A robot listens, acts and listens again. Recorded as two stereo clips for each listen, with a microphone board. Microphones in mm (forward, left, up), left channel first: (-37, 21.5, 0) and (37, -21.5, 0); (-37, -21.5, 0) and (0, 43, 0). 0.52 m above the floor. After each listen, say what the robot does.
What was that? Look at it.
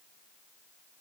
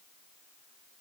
Keep listening.
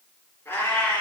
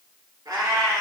Turn 80° left.
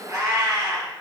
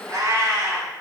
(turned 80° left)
Turn 10° left.
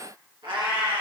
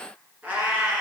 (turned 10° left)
Turn 10° right.
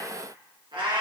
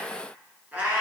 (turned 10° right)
Turn 10° right.
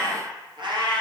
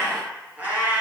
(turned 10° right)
Turn 10° right.
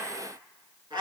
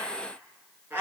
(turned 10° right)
Found it: a cat meowing, straight ahead, 2 to 4 m away.